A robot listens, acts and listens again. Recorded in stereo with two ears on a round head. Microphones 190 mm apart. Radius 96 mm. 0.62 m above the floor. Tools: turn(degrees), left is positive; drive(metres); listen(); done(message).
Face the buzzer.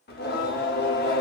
listen()
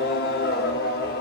listen()
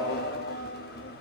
done("I can't make out a buzzer to turn to.")